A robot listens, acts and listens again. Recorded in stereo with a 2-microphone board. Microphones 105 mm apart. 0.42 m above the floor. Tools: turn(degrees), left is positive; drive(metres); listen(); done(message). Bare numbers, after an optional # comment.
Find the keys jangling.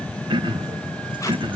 listen()
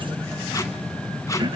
listen()
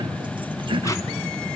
done("I can't make out keys jangling to turn to.")